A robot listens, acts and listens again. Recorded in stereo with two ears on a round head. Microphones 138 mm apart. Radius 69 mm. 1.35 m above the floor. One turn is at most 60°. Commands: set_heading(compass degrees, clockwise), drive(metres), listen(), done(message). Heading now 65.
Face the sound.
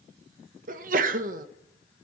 set_heading(125)
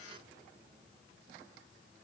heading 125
listen()
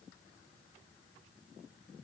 done("I heard a sneeze, but can't make it out now. It was about straight ahead or 60° right.")